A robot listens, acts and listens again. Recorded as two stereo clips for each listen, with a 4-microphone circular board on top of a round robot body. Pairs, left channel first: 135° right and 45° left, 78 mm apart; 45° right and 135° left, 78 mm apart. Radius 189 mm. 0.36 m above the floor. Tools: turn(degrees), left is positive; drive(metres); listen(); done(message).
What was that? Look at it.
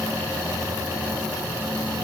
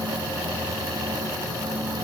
listen()
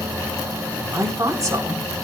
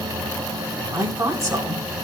turn(degrees=90)
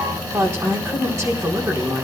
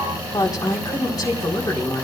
done("Found it: a woman speaking, straight ahead.")